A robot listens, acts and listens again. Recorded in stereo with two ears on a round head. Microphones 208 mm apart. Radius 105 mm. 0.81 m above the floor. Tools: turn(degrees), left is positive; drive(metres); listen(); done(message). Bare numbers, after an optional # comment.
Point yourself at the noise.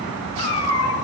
# The cat meowing: about 20° left or 160° left.
turn(20)
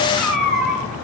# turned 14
turn(30)
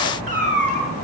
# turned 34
# So it is at 35° right.
turn(-35)
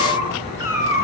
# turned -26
# The cat meowing is now 10° right.
turn(-10)
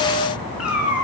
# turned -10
done("Found it: a cat meowing, straight ahead, over 4 m away.")